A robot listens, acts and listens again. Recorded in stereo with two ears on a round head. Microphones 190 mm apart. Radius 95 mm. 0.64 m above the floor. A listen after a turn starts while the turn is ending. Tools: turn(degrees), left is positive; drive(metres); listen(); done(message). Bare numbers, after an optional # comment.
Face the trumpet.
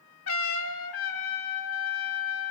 # The trumpet: about 70° left or 110° left.
turn(70)
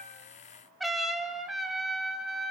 done("Found it: a trumpet, straight ahead, 1 to 2 m away.")